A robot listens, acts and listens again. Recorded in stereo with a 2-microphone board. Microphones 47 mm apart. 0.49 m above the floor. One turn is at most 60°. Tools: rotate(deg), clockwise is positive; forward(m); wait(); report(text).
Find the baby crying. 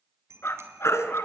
rotate(-60)
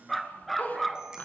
rotate(-30)
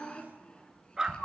rotate(-20)
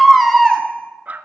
report("Facing the baby crying.")